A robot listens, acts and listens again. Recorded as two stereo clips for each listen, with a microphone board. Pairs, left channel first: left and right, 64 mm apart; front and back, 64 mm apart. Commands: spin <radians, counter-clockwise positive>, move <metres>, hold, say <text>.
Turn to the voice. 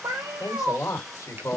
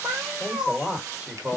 spin 2.01
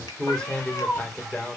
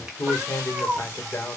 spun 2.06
spin 0.61
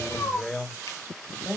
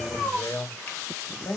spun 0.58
spin 0.52
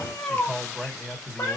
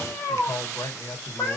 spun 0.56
spin 0.17
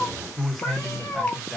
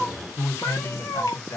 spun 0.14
say Facing the man speaking, 2 to 4 m away.